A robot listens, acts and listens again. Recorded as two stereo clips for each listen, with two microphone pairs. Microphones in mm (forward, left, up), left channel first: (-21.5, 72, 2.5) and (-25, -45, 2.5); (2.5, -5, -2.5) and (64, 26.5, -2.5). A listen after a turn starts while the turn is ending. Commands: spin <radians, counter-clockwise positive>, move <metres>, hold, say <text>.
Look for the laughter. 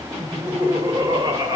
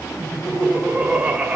spin -0.79
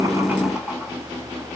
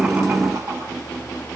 hold
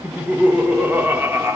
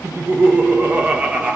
spin -0.70
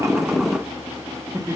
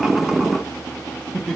spin -1.13
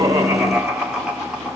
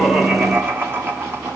spin -0.17
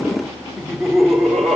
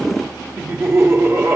say Found it: laughter, straight ahead.